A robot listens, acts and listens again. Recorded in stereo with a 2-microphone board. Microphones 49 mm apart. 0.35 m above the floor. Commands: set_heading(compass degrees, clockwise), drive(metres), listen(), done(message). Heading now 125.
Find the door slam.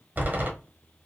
set_heading(160)
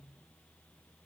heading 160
listen()
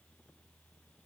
done("I heard a door slam, but can't make it out now. It was about straight ahead or 110° right.")